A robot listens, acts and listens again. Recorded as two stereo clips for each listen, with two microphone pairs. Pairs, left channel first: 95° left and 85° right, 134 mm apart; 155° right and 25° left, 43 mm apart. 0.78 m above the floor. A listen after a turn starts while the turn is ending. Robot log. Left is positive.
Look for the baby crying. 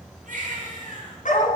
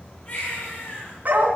note: The baby crying: 100° right.
cmd yaw -100
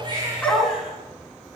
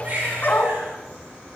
cmd idle
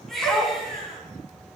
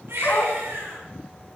end: Facing the baby crying, over 4 m away.